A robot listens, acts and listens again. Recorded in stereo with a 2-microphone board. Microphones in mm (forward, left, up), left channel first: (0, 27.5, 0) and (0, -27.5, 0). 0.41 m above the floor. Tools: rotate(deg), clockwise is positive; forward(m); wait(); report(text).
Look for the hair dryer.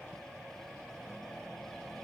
wait()
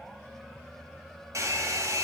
rotate(70)
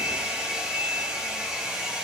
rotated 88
rotate(15)
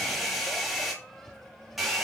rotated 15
report("Found it: a hair dryer, straight ahead.")